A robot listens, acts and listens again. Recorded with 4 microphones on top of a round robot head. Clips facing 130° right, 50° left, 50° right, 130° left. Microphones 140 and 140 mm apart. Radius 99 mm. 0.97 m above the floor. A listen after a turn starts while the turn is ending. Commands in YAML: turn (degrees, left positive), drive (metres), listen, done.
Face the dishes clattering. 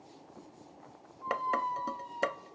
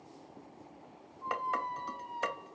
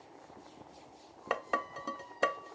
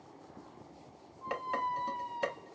turn: -90
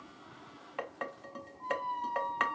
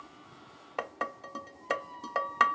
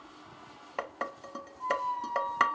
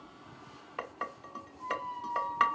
done: "Found it: dishes clattering, straight ahead, 1 to 2 m away."